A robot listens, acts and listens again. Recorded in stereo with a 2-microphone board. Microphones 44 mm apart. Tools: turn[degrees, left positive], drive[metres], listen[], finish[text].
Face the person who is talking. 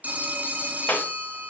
Action: listen[]
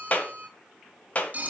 Action: listen[]
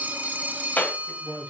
Action: turn[30]
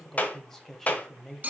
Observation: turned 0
Action: turn[30]
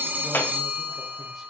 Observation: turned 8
Action: listen[]
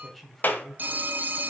Action: turn[30]
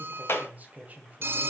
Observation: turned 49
Thought: So it is at 50° right.
Action: turn[-50]
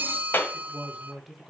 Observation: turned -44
Action: finish[Found it: a man speaking, straight ahead.]